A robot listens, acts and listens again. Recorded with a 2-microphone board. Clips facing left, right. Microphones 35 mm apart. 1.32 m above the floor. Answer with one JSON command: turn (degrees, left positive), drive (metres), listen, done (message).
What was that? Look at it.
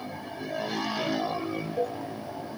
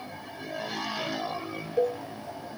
{"turn": -60}
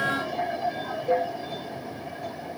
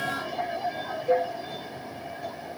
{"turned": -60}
{"done": "Facing the cowbell."}